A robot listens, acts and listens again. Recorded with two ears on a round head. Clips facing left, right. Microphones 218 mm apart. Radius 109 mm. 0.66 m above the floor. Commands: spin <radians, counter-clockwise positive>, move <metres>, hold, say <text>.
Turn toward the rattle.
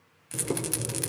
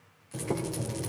spin 1.31
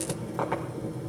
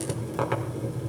hold
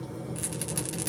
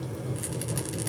say Facing the rattle, 1 to 2 m away.